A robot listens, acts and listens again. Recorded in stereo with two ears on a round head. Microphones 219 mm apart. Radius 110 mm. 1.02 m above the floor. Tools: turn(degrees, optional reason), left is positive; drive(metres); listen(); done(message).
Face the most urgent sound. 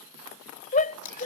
turn(degrees=30, reason="The shout: about 30° left or 150° left.")
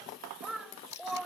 done("Found it: a shout, straight ahead.")